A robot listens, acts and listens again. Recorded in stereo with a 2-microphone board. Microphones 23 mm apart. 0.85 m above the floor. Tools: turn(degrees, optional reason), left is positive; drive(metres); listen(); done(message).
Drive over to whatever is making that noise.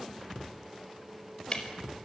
turn(degrees=40, reason="The ticking: about 40° left or 140° left.")
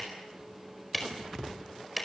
drive(metres=1.0)
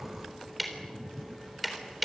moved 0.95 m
drive(metres=1.0)
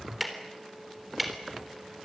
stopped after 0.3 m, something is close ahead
done("Blocked. The ticking is further on, straight ahead.")